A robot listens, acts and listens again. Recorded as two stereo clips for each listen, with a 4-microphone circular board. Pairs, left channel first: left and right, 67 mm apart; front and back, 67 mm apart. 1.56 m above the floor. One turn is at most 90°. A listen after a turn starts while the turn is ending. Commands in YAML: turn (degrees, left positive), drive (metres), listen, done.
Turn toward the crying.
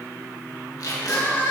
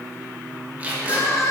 turn: 30
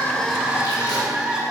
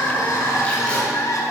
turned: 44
turn: -15
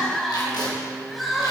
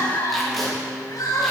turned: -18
done: "Found it: crying, straight ahead, 2 to 4 m away."